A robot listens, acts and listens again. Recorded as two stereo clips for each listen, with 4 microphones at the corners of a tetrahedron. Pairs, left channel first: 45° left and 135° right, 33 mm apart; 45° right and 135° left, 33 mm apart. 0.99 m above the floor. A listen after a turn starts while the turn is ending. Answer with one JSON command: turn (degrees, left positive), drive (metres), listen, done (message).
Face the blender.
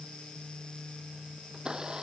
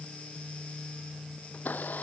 {"turn": -70}
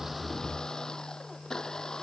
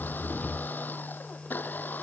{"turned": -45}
{"turn": -25}
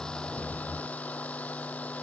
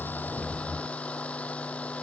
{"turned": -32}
{"done": "Found it: a blender, straight ahead."}